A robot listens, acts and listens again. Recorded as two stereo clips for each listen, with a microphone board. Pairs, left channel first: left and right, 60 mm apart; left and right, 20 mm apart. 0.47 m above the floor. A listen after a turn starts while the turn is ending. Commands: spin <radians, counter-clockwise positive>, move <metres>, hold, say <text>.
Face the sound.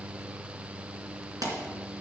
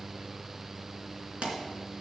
spin -1.57
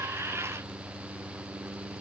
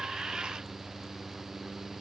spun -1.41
spin -0.17
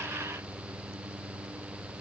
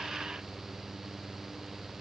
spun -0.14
say Facing where the pop came from. I can't hear it now.